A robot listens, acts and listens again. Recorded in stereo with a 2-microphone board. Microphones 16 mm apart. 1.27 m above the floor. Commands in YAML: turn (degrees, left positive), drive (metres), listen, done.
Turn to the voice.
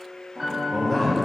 turn: 20
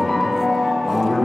turn: 30
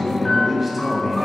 done: "Found it: a man speaking, straight ahead."